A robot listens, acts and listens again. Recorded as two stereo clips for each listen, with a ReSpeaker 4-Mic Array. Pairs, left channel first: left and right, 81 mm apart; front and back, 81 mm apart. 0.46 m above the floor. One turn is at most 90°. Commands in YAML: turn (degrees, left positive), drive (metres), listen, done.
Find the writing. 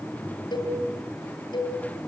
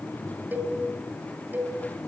listen: true
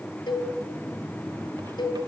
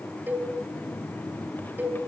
listen: true
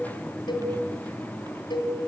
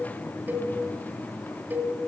done: "I can't make out writing to turn to."